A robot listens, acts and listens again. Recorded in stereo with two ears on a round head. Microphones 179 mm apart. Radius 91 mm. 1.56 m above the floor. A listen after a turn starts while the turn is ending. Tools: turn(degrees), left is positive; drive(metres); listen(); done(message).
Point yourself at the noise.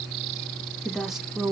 turn(degrees=-30)
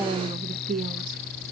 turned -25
turn(degrees=-135)
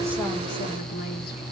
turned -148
turn(degrees=10)
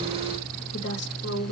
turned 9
turn(degrees=60)
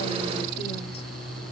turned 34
turn(degrees=25)
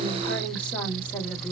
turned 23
done("Facing the woman speaking, 1 to 2 m away.")